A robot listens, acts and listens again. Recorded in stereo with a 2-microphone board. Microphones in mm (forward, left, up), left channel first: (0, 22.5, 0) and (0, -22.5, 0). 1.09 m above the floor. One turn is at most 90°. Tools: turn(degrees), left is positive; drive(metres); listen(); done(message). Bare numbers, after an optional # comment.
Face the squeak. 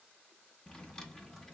listen()
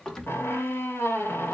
# The squeak: about 65° left or 115° left.
turn(65)
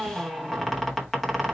done("Facing the squeak, under 1 m away.")